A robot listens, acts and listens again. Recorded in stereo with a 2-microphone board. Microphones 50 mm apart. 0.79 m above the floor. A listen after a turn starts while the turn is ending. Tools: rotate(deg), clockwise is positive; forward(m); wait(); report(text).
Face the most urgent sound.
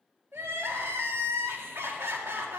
rotate(60)
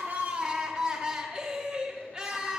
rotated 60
rotate(20)
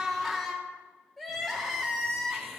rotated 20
report("Facing the crying.")